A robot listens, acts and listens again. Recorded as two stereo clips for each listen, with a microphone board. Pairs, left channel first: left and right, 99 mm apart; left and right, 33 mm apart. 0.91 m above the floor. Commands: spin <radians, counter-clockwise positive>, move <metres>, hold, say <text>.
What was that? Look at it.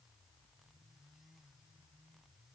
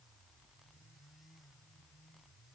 hold
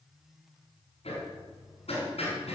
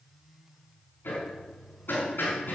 spin 1.57
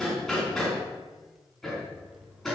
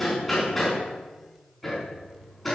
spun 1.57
say Found it: hammering, straight ahead.